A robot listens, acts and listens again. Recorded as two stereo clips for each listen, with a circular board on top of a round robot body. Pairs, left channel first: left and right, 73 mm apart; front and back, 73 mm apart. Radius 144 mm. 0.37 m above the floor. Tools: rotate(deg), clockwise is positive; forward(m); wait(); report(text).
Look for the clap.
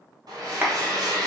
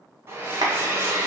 rotate(155)
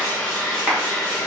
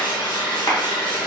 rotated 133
rotate(20)
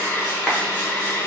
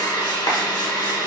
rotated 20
report("Facing the clap.")